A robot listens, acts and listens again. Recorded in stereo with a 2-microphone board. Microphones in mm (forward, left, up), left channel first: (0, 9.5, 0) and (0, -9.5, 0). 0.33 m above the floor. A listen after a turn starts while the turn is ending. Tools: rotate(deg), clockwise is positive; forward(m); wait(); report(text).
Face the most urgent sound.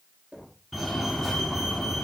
rotate(-30)
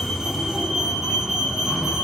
rotate(25)
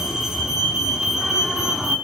rotate(20)
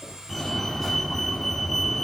report("Facing the fire alarm, over 4 m away.")